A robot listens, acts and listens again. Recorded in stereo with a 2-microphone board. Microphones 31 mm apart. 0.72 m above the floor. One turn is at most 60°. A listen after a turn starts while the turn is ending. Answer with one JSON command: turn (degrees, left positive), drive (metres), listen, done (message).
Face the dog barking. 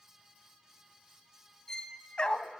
{"turn": 35}
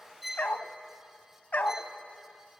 {"turn": 60}
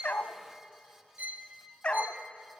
{"turn": 45}
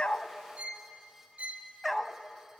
{"done": "Facing the dog barking."}